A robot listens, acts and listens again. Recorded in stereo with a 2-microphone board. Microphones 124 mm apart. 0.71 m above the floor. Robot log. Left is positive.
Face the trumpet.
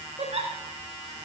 cmd idle
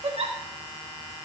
cmd idle
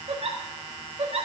end: I can't make out a trumpet, only a giggle.